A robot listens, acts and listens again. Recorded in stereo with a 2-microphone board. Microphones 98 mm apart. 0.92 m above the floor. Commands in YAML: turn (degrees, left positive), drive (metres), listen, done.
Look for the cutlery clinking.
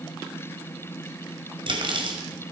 turn: -55
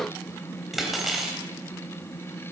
done: "Facing the cutlery clinking, 2 to 4 m away."